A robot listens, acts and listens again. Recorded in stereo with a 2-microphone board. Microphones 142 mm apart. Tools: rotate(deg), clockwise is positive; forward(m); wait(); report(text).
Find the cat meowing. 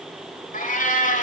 rotate(-65)
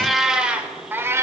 rotate(20)
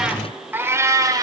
rotate(25)
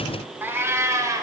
rotate(25)
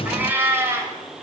rotate(20)
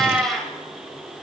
report("Found it: a cat meowing, straight ahead.")